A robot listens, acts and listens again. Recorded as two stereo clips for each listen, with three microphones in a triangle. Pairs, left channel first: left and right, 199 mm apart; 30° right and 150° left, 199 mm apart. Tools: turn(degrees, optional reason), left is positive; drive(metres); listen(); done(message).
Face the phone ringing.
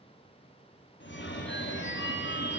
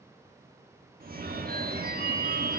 turn(degrees=110, reason="The phone ringing: 110° left.")
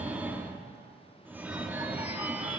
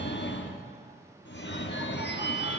turn(degrees=-10, reason="The phone ringing is now 10° right.")
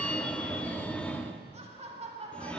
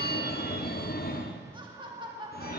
done("Found it: a phone ringing, straight ahead, under 1 m away.")